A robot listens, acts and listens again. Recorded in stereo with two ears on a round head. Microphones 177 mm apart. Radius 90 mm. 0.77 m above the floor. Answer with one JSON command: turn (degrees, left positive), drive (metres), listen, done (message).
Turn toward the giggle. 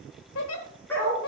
{"turn": 90}
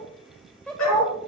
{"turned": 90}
{"done": "Found it: a giggle, straight ahead, 1 to 2 m away."}